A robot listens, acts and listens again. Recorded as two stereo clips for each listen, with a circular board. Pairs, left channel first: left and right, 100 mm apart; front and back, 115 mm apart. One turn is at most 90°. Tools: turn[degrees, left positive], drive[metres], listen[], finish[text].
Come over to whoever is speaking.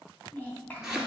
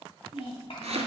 Thought: The child speaking: 20° left.
Action: turn[20]
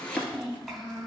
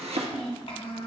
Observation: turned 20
Action: drive[1.0]
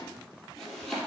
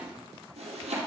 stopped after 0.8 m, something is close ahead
Action: listen[]
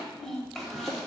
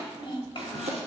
Action: finish[I am next to the child speaking.]